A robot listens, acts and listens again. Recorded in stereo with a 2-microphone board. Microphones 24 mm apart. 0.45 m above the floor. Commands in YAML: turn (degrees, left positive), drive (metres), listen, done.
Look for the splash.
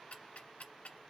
listen: true
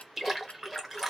turn: -30
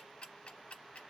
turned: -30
listen: true
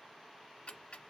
done: "I heard a splash, but can't make it out now. It was about 20° left or 140° right."